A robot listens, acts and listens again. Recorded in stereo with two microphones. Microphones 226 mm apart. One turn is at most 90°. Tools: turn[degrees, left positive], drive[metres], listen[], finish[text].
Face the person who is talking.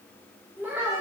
Action: turn[-30]
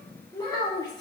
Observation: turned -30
Thought: So it is at 20° left.
Action: turn[20]
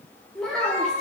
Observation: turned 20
Action: finish[Facing the child speaking, 1 to 2 m away.]